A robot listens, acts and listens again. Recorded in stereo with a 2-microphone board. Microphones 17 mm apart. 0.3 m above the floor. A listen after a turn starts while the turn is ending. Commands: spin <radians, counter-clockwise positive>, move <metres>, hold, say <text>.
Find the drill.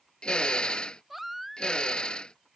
spin 1.13
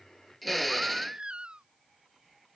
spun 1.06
say Facing the drill.